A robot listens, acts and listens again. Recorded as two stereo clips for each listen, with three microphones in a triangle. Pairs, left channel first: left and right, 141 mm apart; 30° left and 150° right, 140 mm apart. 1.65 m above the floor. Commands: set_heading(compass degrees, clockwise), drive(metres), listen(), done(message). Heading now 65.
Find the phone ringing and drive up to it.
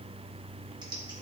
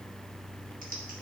listen()
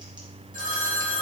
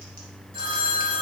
set_heading(170)
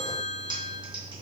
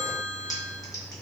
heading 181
set_heading(171)
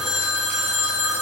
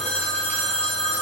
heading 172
drive(1.0)
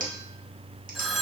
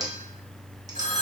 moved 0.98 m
drive(1.0)
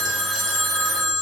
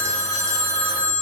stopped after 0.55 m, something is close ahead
done("Arrived at the phone ringing, straight ahead.")